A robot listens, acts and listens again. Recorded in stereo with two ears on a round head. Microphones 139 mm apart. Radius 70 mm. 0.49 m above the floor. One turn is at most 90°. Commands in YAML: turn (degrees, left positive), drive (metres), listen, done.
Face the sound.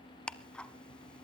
turn: 30
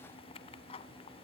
turn: 90
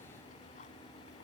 turn: 55
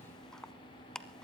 done: "Facing the ticking."